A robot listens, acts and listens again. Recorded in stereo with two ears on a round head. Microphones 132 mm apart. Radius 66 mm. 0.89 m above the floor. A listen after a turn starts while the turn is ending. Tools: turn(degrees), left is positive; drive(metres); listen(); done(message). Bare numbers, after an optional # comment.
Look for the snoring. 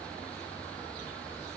listen()
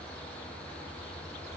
listen()
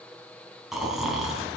turn(-30)
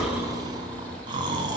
# So it is at 145° right.
turn(-145)
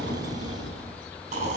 # The snoring is now 50° right.
turn(-50)
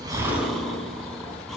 done("Facing the snoring.")